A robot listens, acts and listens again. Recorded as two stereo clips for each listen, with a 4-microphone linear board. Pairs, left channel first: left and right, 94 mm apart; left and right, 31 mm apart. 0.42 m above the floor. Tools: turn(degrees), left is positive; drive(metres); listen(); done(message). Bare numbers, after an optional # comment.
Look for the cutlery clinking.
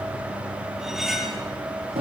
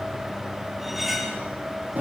turn(-30)
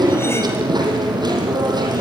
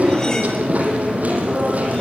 listen()
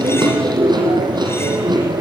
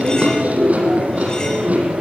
listen()
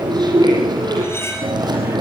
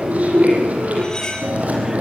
# So it is at 30° left.
turn(30)
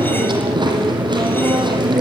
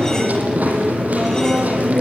listen()
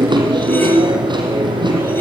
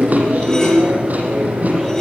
listen()
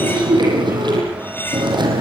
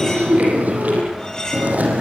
# The cutlery clinking is now 25° left.
turn(25)
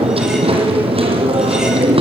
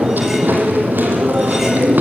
listen()
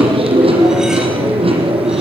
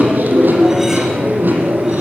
listen()
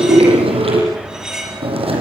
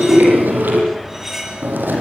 done("Facing the cutlery clinking.")